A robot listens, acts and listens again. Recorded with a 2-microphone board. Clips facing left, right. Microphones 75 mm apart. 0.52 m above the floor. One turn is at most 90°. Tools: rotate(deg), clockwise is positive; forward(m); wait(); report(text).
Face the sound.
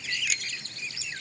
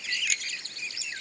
rotate(-30)
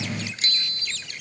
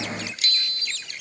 rotate(-90)
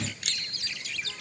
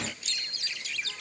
rotate(-65)
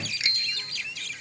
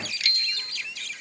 rotate(-20)
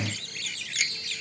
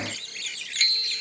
report("Found it: a bicycle bell, straight ahead.")